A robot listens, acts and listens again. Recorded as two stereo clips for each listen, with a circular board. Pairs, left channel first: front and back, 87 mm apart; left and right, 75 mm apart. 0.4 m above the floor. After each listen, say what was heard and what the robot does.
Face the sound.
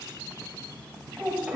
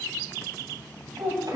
The child speaking: 110° right. Turn 110° right.
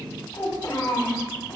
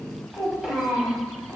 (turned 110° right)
The child speaking is now 25° right. Turn 25° right.
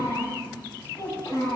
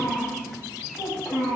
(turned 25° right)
The child speaking is now 20° right. Turn 20° right.
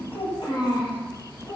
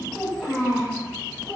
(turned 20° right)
The child speaking is now 15° right. Turn 15° right.
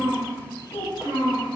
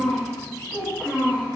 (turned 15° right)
Found it: a child speaking, straight ahead, 2 to 4 m away.